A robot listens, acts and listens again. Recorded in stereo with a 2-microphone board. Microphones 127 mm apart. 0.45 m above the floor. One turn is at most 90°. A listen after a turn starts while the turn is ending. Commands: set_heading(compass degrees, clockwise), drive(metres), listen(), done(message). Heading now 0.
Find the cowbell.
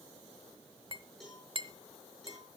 set_heading(330)
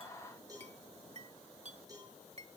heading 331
set_heading(1)
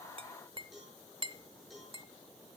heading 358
done("Found it: a cowbell, straight ahead.")